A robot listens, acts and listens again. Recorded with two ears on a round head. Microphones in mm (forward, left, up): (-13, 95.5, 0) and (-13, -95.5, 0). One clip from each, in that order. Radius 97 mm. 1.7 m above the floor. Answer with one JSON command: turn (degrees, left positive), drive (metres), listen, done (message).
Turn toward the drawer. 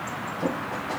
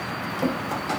{"turn": -55}
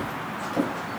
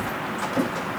{"done": "Facing the drawer."}